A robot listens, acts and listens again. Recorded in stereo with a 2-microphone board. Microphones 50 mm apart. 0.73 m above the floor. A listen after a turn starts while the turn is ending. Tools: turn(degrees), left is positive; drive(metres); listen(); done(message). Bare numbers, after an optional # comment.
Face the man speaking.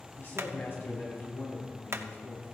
# The man speaking: about 55° left or 125° left.
turn(55)
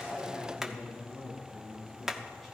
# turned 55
# So it is at 10° left.
turn(10)
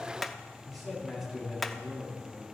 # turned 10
done("Facing the man speaking.")